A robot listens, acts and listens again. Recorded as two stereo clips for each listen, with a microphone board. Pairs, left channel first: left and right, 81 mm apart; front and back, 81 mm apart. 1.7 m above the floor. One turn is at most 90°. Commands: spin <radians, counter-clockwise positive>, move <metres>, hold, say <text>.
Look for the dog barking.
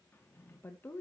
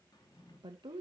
hold
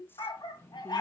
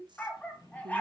spin 1.22
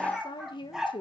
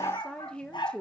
say Facing the dog barking.